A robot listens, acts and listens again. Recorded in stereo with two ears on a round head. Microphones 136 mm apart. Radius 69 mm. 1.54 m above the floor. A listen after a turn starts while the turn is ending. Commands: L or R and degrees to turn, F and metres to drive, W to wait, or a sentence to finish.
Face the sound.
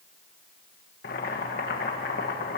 L70
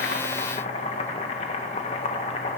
L40
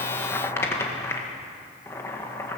L15
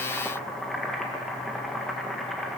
Found it: boiling, straight ahead.